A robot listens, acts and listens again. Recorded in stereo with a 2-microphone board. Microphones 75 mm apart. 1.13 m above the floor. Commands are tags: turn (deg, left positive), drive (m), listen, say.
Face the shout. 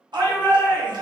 <turn deg="-75"/>
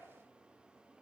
<listen/>
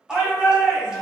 <turn deg="-10"/>
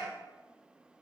<say>Found it: a shout, straight ahead.</say>